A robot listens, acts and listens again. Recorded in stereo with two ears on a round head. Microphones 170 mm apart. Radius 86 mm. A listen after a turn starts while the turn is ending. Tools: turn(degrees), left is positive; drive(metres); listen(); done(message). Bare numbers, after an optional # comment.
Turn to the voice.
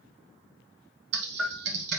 listen()
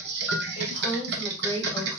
# The woman speaking: about 20° left or 160° left.
turn(20)
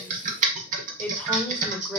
turn(30)
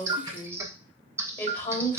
# The woman speaking: about 15° left or 165° left.
turn(15)
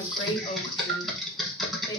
# The woman speaking: about 30° left or 150° left.
turn(30)
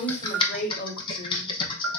# So it is at 130° left.
turn(130)
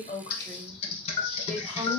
done("Facing the woman speaking, 1 to 2 m away.")